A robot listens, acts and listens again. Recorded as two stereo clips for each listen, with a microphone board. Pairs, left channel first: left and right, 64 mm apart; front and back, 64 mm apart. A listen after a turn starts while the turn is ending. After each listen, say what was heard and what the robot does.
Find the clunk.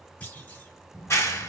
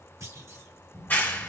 The clunk: 155° left. Turn 155° left.
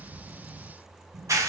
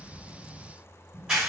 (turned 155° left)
I heard a clunk from this way, but can't make it out now.